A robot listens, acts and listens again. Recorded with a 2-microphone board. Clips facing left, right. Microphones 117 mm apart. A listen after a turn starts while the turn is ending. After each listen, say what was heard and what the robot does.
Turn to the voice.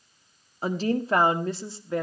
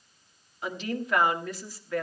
The woman speaking: about 25° left or 155° left. Turn 25° left.
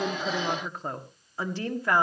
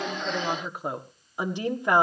So it is at 20° right. Turn 20° right.
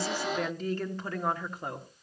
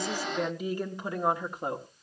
The woman speaking is now 20° right. Turn 20° right.
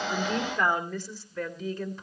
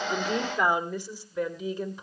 The woman speaking is now 10° right. Turn 10° right.
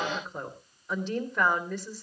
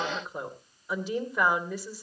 Facing the woman speaking, 2 to 4 m away.